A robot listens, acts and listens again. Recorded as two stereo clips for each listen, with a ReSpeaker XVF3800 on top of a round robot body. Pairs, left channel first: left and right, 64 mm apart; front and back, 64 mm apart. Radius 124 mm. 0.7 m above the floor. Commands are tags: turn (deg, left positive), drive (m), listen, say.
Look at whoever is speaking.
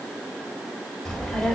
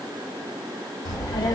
<say>Found it: a child speaking, straight ahead, 2 to 4 m away.</say>